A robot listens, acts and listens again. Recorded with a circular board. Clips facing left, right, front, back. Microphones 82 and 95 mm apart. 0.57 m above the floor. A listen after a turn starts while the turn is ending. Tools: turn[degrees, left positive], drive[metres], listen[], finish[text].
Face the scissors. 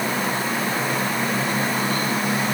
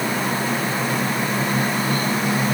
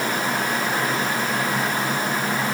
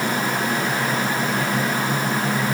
Action: listen[]
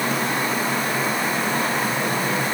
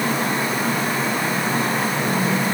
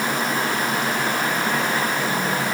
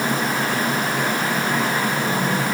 Action: listen[]
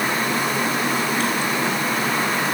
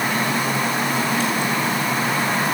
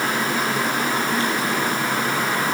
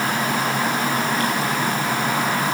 Action: finish[I can't make out scissors to turn to.]